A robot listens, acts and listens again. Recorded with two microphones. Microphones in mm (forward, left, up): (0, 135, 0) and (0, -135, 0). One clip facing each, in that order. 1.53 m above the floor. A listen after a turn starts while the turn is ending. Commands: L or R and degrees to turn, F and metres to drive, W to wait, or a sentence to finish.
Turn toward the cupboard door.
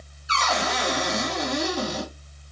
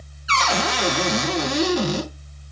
R90
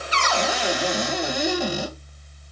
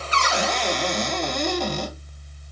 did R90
Facing the cupboard door, 1 to 2 m away.